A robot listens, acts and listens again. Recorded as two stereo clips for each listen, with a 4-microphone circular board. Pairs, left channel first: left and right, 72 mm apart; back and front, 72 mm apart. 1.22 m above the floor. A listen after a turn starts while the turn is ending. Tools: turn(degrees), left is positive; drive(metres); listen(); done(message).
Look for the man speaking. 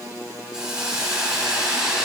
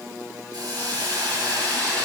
listen()
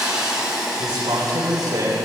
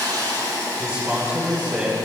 turn(degrees=-65)
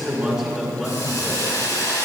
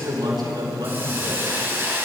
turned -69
done("Facing the man speaking, over 4 m away.")